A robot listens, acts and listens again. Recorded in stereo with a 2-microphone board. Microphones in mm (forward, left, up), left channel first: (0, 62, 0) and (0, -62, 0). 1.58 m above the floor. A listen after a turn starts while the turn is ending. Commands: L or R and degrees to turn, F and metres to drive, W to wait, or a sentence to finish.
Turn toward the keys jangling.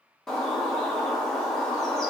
W
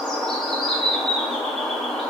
W
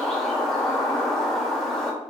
I can't make out keys jangling to turn to.